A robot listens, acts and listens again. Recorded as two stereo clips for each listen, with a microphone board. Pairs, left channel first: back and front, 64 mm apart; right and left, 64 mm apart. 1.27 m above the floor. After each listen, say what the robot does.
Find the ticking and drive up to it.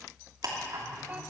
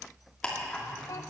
Turn 15° right.
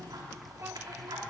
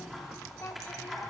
Drive 1.0 m forward.
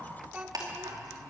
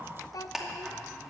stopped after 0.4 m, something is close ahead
Blocked. The ticking is further on, straight ahead.